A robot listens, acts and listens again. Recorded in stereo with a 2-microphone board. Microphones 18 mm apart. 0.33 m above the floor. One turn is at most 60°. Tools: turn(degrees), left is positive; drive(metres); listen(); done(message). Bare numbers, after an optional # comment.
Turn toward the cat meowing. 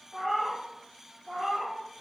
turn(-30)
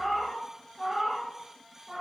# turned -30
done("Facing the cat meowing.")